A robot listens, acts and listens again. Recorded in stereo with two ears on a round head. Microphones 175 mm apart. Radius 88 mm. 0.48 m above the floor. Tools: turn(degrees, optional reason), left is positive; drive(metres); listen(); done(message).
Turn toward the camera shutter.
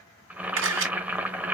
turn(degrees=-90)
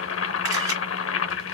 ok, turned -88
listen()
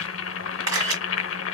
turn(degrees=-15, reason="The camera shutter is now 15° right.")
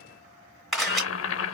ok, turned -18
done("Facing the camera shutter, 2 to 4 m away.")